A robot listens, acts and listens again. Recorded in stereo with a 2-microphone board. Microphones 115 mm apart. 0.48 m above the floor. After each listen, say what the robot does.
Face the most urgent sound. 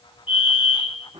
Turn 45° left.
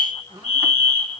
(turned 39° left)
Turn 90° left.
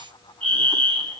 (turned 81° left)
Turn 10° left.
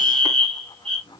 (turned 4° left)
Found it: a fire alarm, straight ahead, 2 to 4 m away.